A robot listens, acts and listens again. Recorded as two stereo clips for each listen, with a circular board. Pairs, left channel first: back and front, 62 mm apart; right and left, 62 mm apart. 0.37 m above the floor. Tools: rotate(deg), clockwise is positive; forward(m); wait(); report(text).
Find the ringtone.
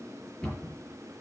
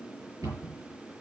wait()
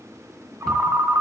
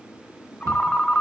rotate(20)
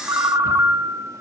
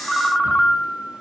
report("Facing the ringtone.")